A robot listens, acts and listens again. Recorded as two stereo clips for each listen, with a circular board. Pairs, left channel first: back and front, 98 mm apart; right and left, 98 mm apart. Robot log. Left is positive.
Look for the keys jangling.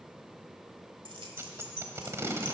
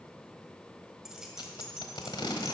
end: Found it: keys jangling, straight ahead.